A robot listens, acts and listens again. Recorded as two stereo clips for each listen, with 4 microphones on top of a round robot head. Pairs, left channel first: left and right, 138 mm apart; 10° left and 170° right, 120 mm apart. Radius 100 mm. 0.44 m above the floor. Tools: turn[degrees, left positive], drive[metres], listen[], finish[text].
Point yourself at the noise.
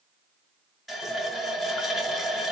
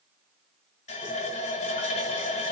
Action: finish[Facing the running tap, 1 to 2 m away.]